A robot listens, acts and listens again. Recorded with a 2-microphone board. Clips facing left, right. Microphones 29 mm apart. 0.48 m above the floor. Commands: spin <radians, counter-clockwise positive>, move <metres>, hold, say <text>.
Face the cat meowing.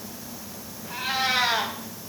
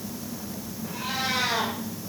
spin 0.79
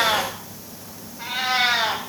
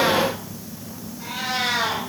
spin 0.61
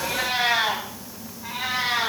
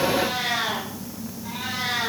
spin 0.79
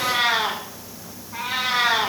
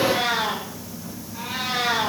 spin 1.40
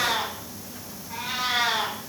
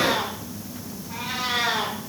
say Facing the cat meowing, 2 to 4 m away.